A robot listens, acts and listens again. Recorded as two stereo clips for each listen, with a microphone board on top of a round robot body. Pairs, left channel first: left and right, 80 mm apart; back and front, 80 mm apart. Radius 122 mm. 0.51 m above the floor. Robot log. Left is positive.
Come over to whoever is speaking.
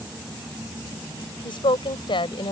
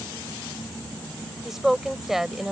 note: The woman speaking: 85° left.
cmd yaw +85
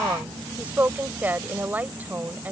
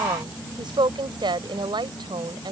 note: The woman speaking is now 20° right.
cmd yaw -20
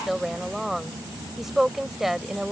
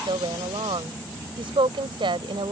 cmd fwd 1.0
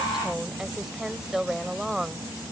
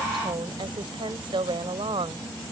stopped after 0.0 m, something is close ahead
end: Blocked. The woman speaking is further on, straight ahead.